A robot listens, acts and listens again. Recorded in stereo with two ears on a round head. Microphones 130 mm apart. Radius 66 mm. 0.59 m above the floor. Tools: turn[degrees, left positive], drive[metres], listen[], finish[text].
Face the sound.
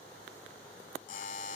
Thought: The buzzer: about 60° left or 120° left.
Action: turn[60]
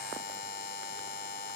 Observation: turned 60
Thought: So it is at 60° left.
Action: turn[60]
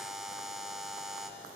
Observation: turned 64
Action: finish[Facing the buzzer, 1 to 2 m away.]